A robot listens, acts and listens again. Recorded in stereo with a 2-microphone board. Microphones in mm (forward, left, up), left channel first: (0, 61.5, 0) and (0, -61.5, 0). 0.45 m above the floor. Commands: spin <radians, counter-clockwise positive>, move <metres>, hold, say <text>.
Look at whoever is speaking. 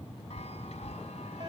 hold
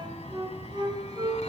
hold
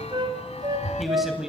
spin -0.52
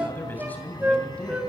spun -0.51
spin 0.17
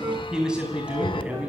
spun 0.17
spin -0.17
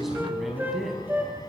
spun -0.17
say Facing the man speaking, over 4 m away.